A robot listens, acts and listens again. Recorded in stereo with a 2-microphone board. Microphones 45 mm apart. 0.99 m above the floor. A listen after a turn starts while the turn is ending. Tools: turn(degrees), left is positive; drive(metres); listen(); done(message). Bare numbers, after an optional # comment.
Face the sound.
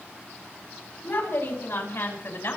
# The woman speaking: about 50° left or 130° left.
turn(50)
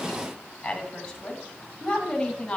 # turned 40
# So it is at 15° left.
turn(15)
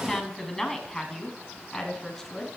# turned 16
done("Facing the woman speaking, over 4 m away.")